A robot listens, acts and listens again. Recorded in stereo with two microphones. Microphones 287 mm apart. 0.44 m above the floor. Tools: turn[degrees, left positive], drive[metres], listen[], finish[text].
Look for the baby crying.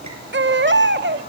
Thought: The baby crying: about 40° right or 140° right.
Action: turn[-40]
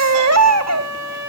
Thought: So it is at 95° right.
Action: turn[-95]
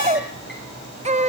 Thought: The baby crying is now 25° right.
Action: turn[-25]
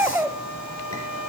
Thought: The baby crying is now 10° right.
Action: turn[-10]
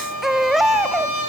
Action: finish[Found it: a baby crying, straight ahead, 1 to 2 m away.]